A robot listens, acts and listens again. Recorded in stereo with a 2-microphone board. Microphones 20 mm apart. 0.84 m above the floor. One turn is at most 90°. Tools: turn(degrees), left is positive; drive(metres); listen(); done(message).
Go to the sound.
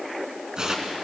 turn(degrees=-35)
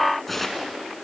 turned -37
drive(metres=1.0)
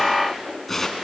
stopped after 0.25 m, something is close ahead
turn(degrees=10)
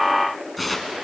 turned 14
done("Something is in my way. I am facing the tearing paper but have not reached it.")